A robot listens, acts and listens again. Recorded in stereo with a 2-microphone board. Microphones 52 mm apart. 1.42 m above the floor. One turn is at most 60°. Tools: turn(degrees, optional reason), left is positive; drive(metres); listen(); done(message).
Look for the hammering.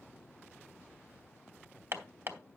turn(degrees=-50, reason="The hammering: about 50° right or 130° right.")
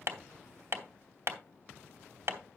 turn(degrees=-60, reason="So it is at 70° right.")
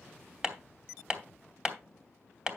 turn(degrees=-15, reason="The hammering is now 15° right.")
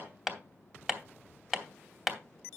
done("Facing the hammering.")